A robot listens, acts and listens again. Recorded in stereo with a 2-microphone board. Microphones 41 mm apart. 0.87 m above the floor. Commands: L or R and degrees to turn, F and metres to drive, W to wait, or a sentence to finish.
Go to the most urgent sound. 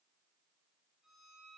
W
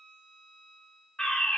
L20
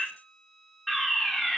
F1.0
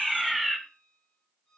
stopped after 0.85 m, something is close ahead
Arrived at the fire alarm, straight ahead.